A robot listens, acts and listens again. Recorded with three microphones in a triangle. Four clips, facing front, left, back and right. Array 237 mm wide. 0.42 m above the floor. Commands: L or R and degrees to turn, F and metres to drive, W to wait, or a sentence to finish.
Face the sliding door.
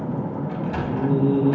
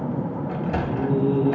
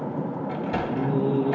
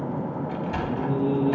L130
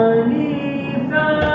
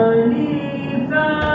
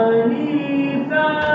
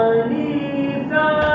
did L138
W
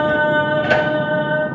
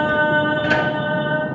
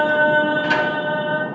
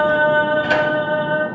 W
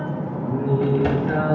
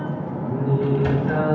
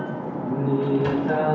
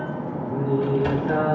I heard a sliding door from this way, but can't make it out now.